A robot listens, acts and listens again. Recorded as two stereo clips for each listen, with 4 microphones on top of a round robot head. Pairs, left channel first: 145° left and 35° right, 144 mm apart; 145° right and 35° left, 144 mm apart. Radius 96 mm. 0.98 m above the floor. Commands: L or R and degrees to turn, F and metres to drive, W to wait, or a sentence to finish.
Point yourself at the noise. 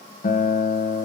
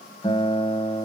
L155
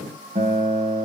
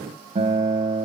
Found it: a guitar, straight ahead.